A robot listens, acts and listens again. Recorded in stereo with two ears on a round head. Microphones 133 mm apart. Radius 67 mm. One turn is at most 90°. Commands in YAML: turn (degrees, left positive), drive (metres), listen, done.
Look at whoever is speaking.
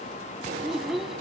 turn: 30
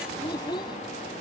turn: 90
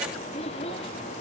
turn: 40
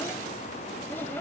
listen: true
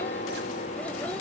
listen: true
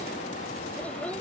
done: "I heard a child speaking from this way, but can't make it out now."